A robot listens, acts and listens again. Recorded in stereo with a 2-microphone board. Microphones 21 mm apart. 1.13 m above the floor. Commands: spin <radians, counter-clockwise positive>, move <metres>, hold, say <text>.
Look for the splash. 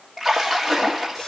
spin -0.52
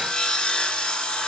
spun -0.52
hold
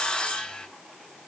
say I heard a splash, but can't make it out now. It was about 25° left or 145° right.